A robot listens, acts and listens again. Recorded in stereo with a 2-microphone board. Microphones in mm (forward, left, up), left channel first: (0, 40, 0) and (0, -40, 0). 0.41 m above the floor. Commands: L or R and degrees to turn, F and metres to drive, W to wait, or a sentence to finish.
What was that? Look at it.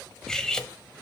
L30
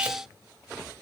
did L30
W
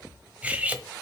R20
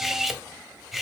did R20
Found it: cutlery clinking, straight ahead.